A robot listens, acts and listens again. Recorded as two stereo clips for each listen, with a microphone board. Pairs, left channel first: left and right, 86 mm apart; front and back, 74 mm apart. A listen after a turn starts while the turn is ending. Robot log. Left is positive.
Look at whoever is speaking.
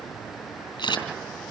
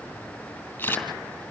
cmd idle
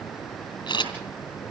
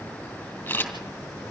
cmd idle
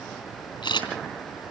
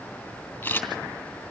end: I can't make out anyone speaking to turn to.